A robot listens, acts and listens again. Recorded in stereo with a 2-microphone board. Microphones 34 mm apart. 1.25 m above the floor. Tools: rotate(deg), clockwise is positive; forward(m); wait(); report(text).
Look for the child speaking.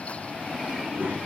rotate(90)
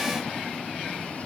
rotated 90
wait()
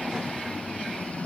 wait()
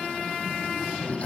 rotate(35)
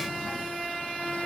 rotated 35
wait()
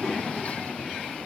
wait()
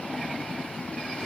report("I heard a child speaking from this way, but can't make it out now.")